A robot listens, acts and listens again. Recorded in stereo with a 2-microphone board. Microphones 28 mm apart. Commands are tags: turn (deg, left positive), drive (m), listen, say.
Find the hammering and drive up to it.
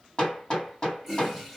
<turn deg="30"/>
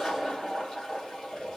<listen/>
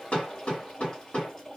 <turn deg="120"/>
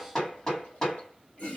<turn deg="25"/>
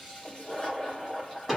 <drive m="1.0"/>
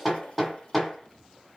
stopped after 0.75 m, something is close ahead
<say>I am next to the hammering.</say>